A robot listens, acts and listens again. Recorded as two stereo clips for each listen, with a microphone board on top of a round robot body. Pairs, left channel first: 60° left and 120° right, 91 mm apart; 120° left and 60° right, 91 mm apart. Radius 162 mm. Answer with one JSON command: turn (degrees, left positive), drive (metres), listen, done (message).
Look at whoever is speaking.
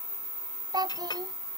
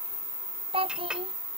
{"turn": -75}
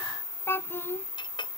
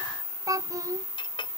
{"done": "Facing the child speaking."}